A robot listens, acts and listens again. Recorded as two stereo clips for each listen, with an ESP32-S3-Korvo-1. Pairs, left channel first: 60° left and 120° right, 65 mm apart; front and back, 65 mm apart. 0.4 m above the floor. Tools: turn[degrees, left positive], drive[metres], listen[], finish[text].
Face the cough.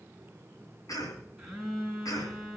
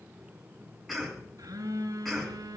Thought: The cough: 90° left.
Action: turn[90]
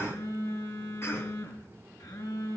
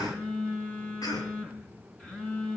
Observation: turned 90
Thought: The cough is now 10° left.
Action: turn[10]
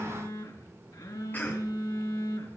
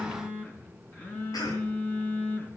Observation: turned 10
Action: finish[Facing the cough, over 4 m away.]